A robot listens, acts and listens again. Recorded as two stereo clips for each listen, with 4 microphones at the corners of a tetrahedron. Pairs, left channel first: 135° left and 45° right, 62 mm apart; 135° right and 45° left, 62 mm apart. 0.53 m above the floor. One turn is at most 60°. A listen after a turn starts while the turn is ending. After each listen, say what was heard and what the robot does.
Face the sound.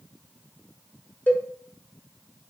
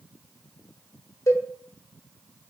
The cowbell: 165° right. Turn 60° right.
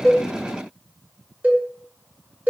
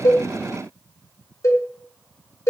The cowbell is now 105° right. Turn 60° right.
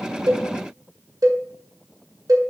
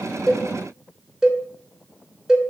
The cowbell is now 35° right. Turn 35° right.
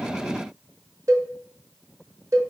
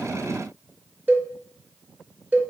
The cowbell is now 15° right. Turn 15° right.
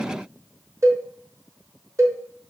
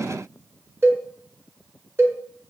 Facing the cowbell.